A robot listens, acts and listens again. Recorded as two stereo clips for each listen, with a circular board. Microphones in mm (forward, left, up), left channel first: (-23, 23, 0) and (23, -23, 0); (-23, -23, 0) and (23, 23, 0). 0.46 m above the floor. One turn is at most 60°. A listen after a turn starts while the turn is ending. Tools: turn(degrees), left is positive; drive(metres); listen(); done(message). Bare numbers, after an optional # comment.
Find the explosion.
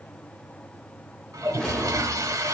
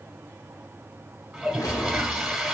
# The explosion: 145° right.
turn(-60)
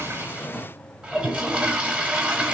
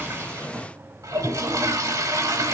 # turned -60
# Nothing new. It was at 85° right.
turn(-60)
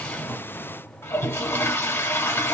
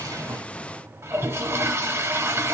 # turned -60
# Nothing new. It was at 25° right.
turn(-25)
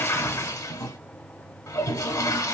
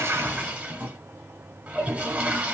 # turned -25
done("Facing where the explosion came from. I can't hear it now.")